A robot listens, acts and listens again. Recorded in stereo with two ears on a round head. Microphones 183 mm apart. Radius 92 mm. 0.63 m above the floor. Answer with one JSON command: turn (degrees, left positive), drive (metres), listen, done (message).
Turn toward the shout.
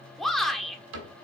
{"turn": 30}
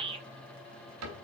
{"turn": -30}
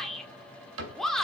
{"done": "Facing the shout, 1 to 2 m away."}